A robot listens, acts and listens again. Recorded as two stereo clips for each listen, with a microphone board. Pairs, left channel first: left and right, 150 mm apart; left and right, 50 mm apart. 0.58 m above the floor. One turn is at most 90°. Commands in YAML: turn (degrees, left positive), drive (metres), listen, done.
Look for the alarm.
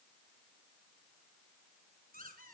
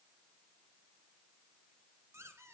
listen: true
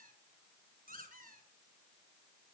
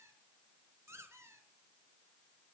listen: true
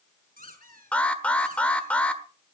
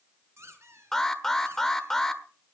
turn: 30
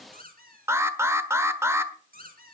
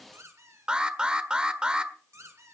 turn: -20
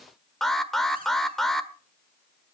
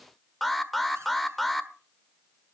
done: "Found it: an alarm, straight ahead, 1 to 2 m away."